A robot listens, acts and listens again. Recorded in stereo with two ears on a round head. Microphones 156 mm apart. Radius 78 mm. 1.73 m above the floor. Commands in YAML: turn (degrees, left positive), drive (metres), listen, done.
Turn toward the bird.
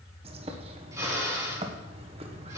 turn: -35
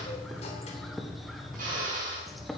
done: "Facing the bird."